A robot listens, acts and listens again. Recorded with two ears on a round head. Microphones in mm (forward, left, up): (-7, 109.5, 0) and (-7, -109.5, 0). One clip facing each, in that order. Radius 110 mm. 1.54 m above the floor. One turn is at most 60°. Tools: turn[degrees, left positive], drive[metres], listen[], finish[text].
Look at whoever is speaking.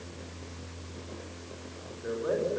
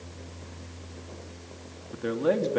Action: turn[-60]
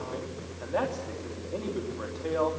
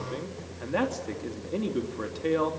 Thought: So it is at 35° right.
Action: turn[-35]
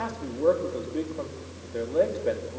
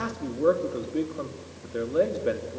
Thought: The man speaking is now 15° right.
Action: turn[-15]
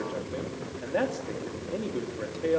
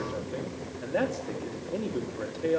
Action: finish[Found it: a man speaking, straight ahead, 2 to 4 m away.]